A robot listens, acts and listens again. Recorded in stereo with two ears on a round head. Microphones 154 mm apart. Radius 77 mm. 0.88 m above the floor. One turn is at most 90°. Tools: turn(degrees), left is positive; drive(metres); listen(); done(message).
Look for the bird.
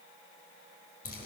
listen()
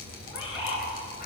turn(degrees=90)
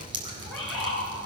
done("Facing the bird, over 4 m away.")